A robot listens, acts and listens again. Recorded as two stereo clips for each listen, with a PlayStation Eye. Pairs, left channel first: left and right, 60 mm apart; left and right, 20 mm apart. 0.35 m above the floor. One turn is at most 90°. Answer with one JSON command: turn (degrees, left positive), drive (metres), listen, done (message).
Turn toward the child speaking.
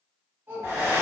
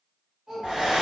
{"turn": -45}
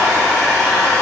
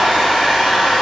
{"listen": true}
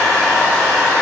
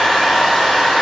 {"listen": true}
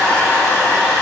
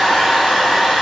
{"done": "I heard a child speaking, but can't make it out now. It was about straight ahead or 90° right."}